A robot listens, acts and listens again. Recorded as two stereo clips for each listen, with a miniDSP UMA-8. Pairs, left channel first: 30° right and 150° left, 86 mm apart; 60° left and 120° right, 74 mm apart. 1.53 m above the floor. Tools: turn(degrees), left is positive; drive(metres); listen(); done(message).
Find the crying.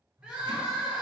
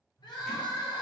turn(degrees=70)
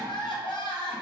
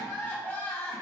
done("Facing the crying.")